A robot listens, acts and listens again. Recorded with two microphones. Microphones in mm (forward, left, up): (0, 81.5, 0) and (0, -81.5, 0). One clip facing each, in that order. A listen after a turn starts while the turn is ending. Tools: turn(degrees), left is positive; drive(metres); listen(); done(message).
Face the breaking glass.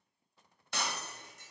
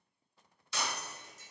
turn(degrees=55)
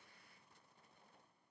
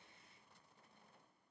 listen()
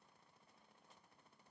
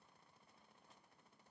done("I heard breaking glass, but can't make it out now. It was about straight ahead or 70° left.")